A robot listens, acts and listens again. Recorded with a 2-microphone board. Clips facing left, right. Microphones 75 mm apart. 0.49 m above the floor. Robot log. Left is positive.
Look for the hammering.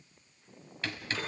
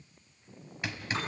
note: The hammering: about 15° right or 165° right.
cmd yaw -15
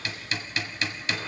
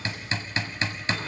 note: So it is at 150° right.
cmd yaw -150
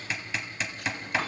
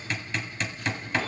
end: Found it: hammering, straight ahead.